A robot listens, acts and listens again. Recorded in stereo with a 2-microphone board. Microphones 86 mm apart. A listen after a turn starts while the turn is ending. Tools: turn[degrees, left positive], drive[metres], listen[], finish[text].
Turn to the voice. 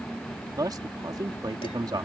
Thought: The man speaking: about 50° right or 130° right.
Action: turn[-50]
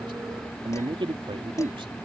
Thought: So it is at 80° right.
Action: turn[-80]
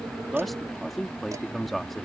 Action: finish[Facing the man speaking.]